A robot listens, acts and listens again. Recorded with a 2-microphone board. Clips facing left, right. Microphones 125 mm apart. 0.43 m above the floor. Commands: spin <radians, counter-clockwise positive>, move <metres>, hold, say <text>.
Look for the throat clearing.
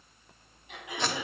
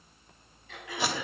spin 0.35
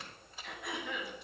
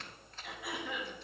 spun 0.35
say Found it: throat clearing, straight ahead.